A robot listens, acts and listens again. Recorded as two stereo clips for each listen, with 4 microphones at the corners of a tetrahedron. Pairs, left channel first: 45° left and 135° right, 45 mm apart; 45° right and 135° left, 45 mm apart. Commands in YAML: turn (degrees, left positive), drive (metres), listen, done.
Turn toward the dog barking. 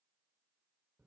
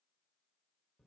listen: true
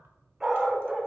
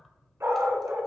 turn: 145
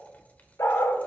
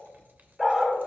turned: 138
turn: 55
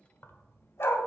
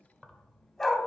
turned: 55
turn: 35
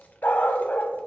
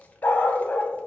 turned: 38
done: "Facing the dog barking."